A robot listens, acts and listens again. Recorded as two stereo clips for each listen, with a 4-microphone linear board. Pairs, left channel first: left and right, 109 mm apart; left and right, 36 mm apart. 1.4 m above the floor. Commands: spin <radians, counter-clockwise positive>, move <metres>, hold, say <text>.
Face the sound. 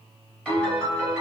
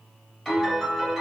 spin 0.52
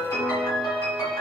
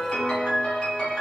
spin 2.44
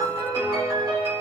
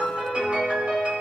spin -0.87
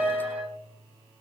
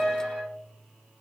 spin -0.35
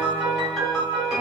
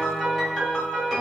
say Found it: a piano, straight ahead.